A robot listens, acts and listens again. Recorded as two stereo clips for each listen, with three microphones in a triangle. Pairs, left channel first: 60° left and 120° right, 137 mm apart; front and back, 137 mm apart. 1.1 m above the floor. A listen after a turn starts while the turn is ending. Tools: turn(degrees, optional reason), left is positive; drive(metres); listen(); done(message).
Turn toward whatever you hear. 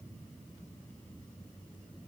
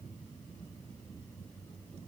listen()
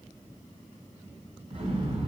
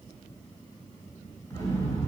turn(degrees=-70, reason="The explosion: 70° right.")
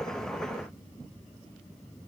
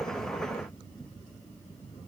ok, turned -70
done("Facing where the explosion came from. I can't hear it now.")